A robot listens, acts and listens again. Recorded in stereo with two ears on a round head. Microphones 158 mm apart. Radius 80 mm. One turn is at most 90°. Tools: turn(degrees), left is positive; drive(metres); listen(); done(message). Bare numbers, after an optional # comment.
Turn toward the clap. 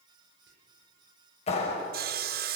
# The clap: about 40° left or 140° left.
turn(40)
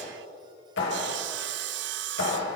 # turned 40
# So it is at 105° left.
turn(90)
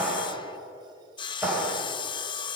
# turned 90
# The clap is now 10° right.
turn(-10)
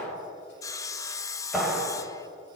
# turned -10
done("Facing the clap.")